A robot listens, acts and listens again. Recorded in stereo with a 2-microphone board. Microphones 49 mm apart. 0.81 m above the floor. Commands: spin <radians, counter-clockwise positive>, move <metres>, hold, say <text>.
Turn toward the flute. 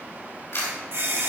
hold
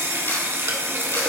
hold
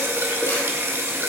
say I can't make out a flute to turn to.